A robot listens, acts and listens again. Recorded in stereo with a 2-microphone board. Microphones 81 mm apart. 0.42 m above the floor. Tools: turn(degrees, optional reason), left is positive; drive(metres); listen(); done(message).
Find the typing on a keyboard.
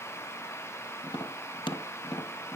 listen()
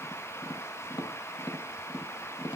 listen()
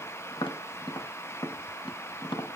done("I can't make out typing on a keyboard to turn to.")